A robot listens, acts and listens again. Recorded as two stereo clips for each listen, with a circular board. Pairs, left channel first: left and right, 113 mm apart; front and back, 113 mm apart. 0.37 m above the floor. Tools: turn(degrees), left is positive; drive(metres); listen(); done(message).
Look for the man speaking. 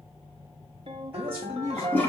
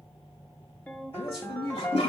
turn(degrees=-25)
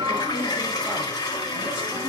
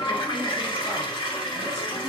listen()
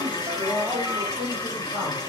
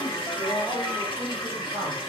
turn(degrees=-10)
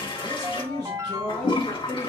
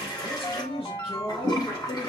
done("Facing the man speaking, over 4 m away.")